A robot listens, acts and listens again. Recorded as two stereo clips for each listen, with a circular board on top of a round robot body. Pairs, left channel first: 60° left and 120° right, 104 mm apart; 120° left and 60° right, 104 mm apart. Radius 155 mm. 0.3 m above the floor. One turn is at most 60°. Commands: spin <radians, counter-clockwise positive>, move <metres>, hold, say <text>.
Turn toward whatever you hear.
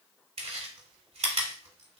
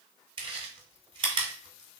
spin -1.05
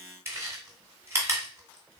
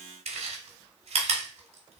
spin -0.96
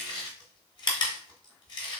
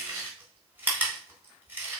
spin 0.26
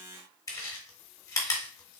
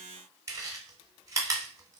say Facing the chewing, 1 to 2 m away.